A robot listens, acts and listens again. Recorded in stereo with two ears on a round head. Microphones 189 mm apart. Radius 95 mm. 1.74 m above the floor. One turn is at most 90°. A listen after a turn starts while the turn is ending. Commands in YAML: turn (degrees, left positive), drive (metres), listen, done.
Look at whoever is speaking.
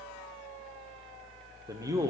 turn: -15
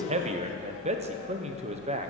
turn: -90
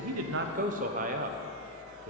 turn: -40
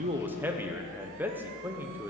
turn: -10
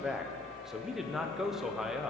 done: "Facing the man speaking, 1 to 2 m away."